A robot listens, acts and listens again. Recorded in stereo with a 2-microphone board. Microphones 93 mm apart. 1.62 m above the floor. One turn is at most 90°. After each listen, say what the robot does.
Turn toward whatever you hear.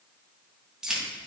Turn 30° right.
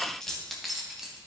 Turn 30° right.
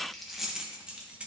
Turn 30° right.
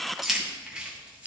Turn 30° right.
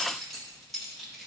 Turn 30° left.
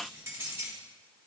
Turn 25° right.
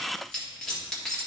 Turn 10° left.
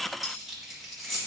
Facing the keys jangling, 1 to 2 m away.